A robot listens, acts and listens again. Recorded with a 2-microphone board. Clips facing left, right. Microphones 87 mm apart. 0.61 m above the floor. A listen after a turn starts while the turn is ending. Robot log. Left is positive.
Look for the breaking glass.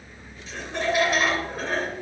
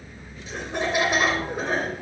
cmd idle
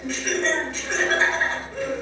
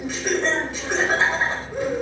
cmd idle
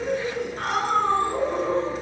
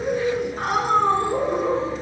end: I can't make out breaking glass to turn to.